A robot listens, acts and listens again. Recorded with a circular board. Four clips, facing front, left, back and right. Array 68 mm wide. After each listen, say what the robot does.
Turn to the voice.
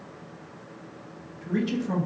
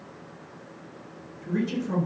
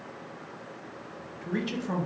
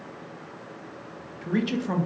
Turn 105° right.
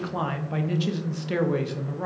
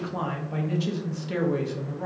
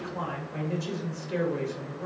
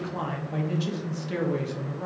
Found it: a man speaking, straight ahead, under 1 m away.